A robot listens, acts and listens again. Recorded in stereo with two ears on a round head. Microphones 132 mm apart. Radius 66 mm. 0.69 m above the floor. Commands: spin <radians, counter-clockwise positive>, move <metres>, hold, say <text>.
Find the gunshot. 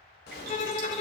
spin 1.57
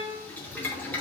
say Facing where the gunshot came from. I can't hear it now.